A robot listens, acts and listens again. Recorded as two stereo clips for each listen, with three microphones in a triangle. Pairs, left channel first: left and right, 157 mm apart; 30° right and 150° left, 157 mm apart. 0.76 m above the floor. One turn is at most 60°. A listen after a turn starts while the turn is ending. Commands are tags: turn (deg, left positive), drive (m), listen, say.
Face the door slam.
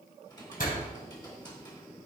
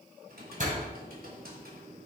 <turn deg="60"/>
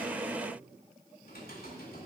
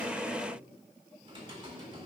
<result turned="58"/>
<turn deg="60"/>
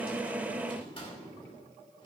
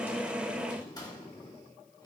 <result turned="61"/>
<say>Facing where the door slam came from. I can't hear it now.</say>